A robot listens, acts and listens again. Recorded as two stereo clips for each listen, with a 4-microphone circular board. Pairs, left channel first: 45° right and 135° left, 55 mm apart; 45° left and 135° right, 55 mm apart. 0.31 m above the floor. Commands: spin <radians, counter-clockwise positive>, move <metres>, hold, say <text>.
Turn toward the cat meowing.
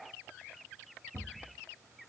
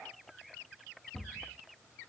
hold
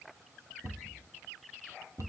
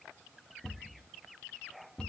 hold
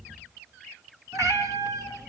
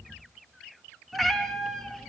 spin 2.27
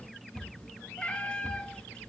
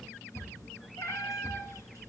spin 0.52
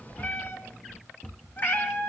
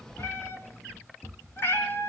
say Facing the cat meowing, 2 to 4 m away.